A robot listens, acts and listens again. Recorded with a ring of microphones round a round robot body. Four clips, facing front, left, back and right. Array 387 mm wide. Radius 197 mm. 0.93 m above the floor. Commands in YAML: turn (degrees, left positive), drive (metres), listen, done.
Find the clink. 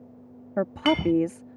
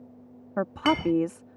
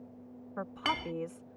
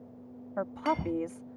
turn: 80
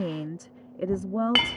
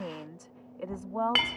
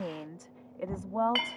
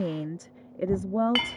done: "Facing the clink."